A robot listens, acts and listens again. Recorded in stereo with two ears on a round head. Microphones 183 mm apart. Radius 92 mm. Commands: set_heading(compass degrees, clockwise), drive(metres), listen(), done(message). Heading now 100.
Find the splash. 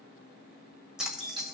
set_heading(130)
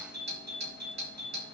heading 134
listen()
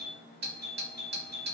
done("I heard a splash, but can't make it out now. It was about 30° left or 145° right.")